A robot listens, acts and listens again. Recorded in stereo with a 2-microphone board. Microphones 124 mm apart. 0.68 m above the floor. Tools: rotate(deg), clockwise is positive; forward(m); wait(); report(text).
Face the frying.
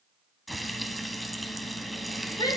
rotate(-30)
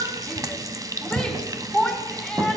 rotate(30)
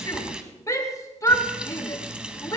rotate(10)
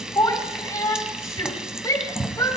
report("Found it: frying, straight ahead.")